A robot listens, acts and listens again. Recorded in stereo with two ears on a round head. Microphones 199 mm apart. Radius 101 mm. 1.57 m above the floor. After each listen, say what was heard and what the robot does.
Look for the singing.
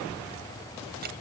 Keep listening.
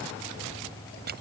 Keep listening.
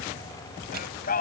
The singing: about 40° left or 140° left. Turn 40° left.
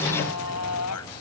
So it is at 90° left. Turn 90° left.
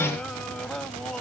Found it: singing, straight ahead.